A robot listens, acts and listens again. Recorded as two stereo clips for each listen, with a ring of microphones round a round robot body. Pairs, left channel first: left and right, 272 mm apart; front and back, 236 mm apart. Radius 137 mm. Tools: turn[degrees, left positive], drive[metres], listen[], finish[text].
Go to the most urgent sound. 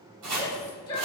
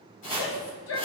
Thought: The shout: 15° left.
Action: turn[15]
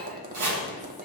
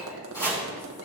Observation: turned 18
Action: listen[]
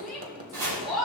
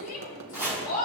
Action: drive[1.0]
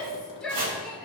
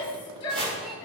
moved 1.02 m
Action: drive[1.0]
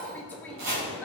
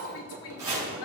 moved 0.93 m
Action: drive[1.0]
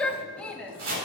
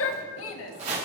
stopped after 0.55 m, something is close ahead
Action: finish[I am next to the shout.]